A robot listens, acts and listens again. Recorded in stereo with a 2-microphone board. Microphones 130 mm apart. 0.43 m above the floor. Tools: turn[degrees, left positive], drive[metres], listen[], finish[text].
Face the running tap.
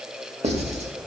Action: listen[]
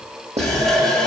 Action: turn[30]
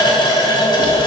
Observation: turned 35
Thought: So it is at 140° left.
Action: turn[140]
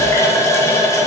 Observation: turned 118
Thought: The running tap is now 25° left.
Action: turn[25]
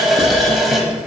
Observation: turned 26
Action: finish[Found it: a running tap, straight ahead, 1 to 2 m away.]